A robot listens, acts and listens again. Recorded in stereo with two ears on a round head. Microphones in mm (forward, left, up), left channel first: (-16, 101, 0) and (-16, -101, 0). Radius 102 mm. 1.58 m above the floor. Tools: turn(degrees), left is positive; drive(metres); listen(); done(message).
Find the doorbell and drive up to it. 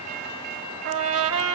listen()
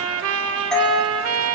turn(degrees=30)
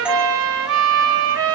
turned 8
turn(degrees=-30)
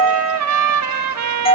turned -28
turn(degrees=25)
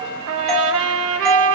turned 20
drive(metres=1.0)
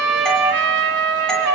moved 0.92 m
listen()
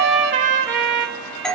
drive(metres=1.0)
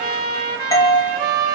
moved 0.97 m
turn(degrees=15)
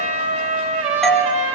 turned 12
drive(metres=1.0)
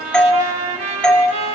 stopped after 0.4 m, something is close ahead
done("Arrived at the doorbell, straight ahead.")